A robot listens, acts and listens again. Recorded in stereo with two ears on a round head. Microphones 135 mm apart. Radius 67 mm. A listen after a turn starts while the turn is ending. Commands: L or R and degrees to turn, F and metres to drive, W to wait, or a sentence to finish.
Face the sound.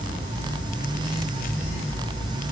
W
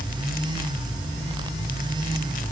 W
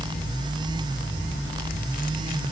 I can't make out anything.